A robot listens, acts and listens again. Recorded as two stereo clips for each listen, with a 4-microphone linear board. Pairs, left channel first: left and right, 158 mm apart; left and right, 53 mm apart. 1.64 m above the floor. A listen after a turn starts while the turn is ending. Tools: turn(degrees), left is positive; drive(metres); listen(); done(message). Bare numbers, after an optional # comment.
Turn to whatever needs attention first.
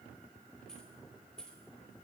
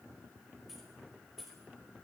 listen()
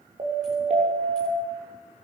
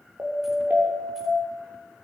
# The siren: about 45° right or 135° right.
turn(-45)
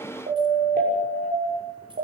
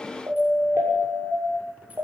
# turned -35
# So it is at 100° right.
turn(-100)
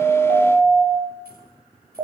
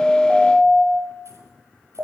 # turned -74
# The siren is now 25° right.
turn(-25)
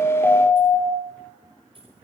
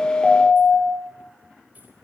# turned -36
# The siren is now 10° left.
turn(10)
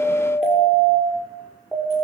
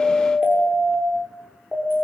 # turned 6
done("Found it: a siren, straight ahead, over 4 m away.")